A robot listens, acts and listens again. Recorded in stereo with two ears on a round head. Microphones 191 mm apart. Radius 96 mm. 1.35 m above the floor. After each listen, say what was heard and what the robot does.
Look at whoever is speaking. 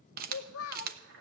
The child speaking: about 75° left or 105° left. Turn 75° left.
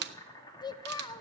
So it is at 20° left. Turn 20° left.
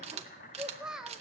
Found it: a child speaking, straight ahead, under 1 m away.